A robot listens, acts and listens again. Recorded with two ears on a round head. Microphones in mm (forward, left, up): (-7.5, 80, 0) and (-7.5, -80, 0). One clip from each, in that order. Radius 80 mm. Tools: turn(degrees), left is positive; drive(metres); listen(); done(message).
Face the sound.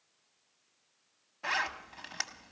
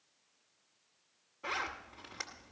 turn(degrees=65)
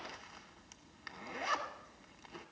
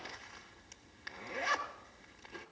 done("Facing the zipper.")